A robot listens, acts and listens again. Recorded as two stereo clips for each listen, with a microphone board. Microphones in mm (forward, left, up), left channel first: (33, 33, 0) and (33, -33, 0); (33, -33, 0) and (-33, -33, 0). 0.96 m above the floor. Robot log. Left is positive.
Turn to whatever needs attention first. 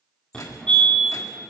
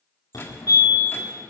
note: The fire alarm: 15° left.
cmd yaw +15
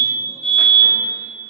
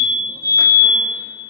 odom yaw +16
end: Found it: a fire alarm, straight ahead.